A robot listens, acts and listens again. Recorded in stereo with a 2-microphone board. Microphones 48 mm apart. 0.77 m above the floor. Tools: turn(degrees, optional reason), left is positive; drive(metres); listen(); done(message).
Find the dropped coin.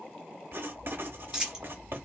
turn(degrees=-30)
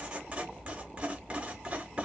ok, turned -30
listen()
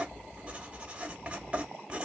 done("I heard a dropped coin, but can't make it out now. It was about 15° left or 135° right.")